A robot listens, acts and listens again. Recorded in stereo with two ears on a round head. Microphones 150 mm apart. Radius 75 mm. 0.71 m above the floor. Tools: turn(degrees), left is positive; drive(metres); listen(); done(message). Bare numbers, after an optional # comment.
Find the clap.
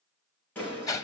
turn(30)
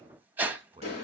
# So it is at 140° left.
turn(140)
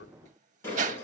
# The clap is now 15° left.
turn(15)
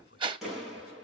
done("Found it: a clap, straight ahead, over 4 m away.")